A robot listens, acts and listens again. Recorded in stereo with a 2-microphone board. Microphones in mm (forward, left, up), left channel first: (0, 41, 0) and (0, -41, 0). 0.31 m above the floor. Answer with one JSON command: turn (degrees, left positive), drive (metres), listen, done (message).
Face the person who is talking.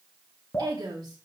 {"turn": -55}
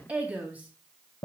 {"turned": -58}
{"turn": -20}
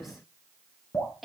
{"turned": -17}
{"done": "Facing the woman speaking."}